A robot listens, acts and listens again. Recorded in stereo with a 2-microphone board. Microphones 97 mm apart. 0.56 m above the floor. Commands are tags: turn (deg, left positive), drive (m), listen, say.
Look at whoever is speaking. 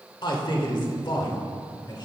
<turn deg="55"/>
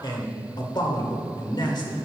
<turn deg="60"/>
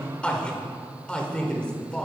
<turn deg="15"/>
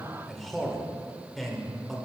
<say>Facing the man speaking, 1 to 2 m away.</say>